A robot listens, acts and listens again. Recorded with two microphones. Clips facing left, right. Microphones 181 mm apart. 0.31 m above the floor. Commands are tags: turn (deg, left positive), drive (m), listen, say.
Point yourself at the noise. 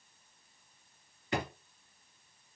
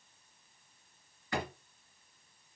<turn deg="20"/>
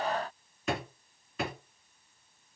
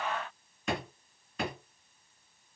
<say>Found it: a drawer, straight ahead.</say>